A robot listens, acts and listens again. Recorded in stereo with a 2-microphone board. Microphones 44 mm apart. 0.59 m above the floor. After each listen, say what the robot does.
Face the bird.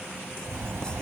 Turn 70° right.
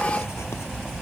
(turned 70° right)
Found it: a bird, straight ahead.